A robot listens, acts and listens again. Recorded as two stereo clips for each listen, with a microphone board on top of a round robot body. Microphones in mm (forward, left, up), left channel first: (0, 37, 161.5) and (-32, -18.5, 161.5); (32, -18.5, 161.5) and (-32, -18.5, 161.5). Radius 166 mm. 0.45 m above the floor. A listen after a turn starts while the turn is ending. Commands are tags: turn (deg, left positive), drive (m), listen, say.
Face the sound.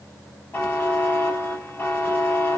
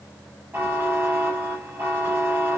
<turn deg="120"/>
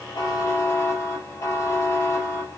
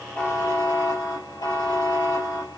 <turn deg="15"/>
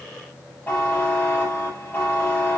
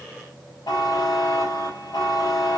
<say>Facing the buzzer, 2 to 4 m away.</say>